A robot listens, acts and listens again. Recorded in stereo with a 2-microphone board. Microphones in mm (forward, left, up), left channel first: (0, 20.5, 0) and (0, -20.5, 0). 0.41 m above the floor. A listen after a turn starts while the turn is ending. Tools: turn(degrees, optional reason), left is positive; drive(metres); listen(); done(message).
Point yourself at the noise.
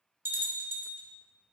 turn(degrees=-65, reason="The bell: about 65° right or 115° right.")
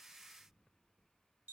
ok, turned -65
listen()
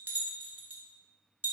turn(degrees=-50, reason="So it is at 50° right.")
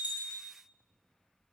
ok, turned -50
listen()
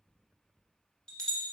turn(degrees=20, reason="The bell is now 20° left.")
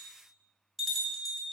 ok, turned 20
done("Found it: a bell, straight ahead, 1 to 2 m away.")